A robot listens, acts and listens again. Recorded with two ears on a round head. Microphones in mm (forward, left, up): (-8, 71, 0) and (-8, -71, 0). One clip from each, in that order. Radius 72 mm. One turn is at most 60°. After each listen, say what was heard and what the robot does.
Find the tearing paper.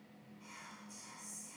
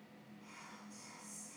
Keep listening.
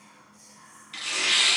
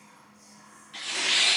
The tearing paper: about 55° left or 125° left. Turn 55° left.
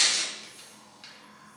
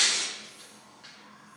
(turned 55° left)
So it is at 65° left. Turn 60° left.
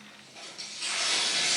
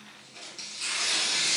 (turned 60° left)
The tearing paper is now 15° right. Turn 15° right.
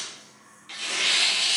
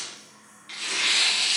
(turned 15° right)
Facing the tearing paper.